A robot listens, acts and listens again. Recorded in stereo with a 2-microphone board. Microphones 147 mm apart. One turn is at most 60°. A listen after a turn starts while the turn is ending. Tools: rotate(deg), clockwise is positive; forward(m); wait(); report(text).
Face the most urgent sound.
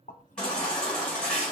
rotate(-30)
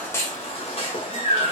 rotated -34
rotate(-60)
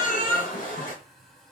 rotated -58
rotate(-60)
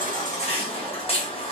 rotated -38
rotate(-45)
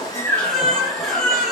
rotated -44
report("Facing the baby crying, 1 to 2 m away.")